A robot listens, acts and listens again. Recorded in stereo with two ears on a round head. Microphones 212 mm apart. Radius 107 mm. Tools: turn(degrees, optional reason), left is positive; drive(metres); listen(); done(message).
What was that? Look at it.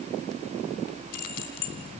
turn(degrees=90)
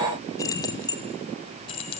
turn(degrees=25, reason="So it is at 25° left.")
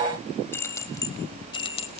turn(degrees=25, reason="The keys jangling is now 25° left.")
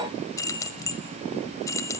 turn(degrees=15, reason="The keys jangling is now 15° left.")
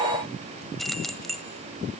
done("Facing the keys jangling, 1 to 2 m away.")